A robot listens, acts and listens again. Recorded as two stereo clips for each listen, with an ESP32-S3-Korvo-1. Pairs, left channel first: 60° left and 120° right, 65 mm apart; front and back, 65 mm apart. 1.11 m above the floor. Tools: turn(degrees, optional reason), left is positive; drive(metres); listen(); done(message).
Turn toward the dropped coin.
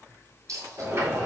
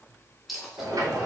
turn(degrees=-90, reason="The dropped coin: 90° right.")
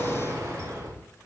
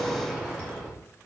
done("Facing where the dropped coin came from. I can't hear it now.")